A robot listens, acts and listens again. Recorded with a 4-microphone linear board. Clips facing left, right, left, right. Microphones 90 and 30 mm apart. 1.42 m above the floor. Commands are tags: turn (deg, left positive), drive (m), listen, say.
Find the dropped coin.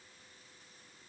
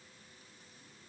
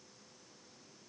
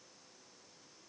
<listen/>
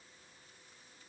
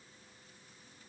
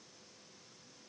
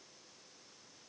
<listen/>
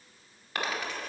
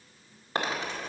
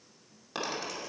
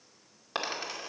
<turn deg="-30"/>
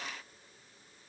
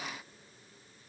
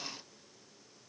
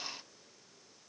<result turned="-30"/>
<listen/>
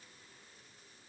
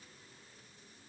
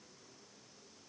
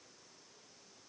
<say>I heard a dropped coin, but can't make it out now. It was about straight ahead or 120° right.</say>